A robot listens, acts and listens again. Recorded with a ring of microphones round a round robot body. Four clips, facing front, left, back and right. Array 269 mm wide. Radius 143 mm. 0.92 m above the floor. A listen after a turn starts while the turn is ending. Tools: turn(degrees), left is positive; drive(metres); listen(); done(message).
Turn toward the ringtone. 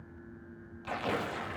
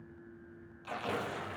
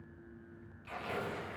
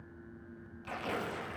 listen()
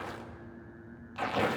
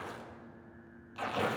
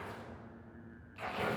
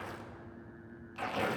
listen()
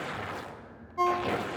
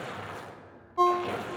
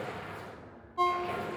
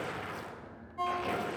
turn(degrees=80)
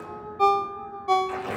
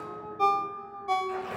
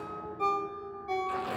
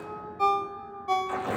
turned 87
done("Facing the ringtone, under 1 m away.")